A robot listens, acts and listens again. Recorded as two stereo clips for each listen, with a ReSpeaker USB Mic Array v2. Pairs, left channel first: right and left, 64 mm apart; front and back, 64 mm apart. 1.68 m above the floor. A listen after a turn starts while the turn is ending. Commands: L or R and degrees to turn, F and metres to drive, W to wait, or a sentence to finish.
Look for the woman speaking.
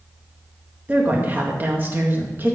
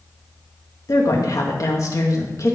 L35
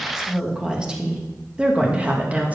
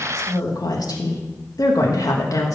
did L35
L25
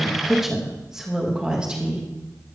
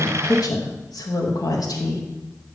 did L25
L15
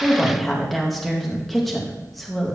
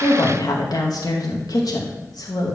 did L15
Facing the woman speaking, 2 to 4 m away.